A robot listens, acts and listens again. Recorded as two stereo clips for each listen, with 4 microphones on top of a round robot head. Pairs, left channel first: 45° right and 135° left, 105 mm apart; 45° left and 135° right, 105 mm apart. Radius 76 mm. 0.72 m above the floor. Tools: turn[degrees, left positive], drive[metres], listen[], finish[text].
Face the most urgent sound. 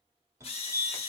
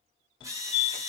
Thought: The fire alarm: 75° left.
Action: turn[75]
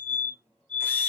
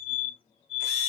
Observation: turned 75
Thought: The fire alarm is now 35° left.
Action: turn[35]
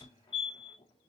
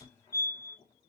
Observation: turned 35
Thought: The fire alarm is now 10° right.
Action: turn[-10]
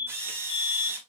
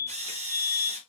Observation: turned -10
Action: finish[Found it: a fire alarm, straight ahead, 2 to 4 m away.]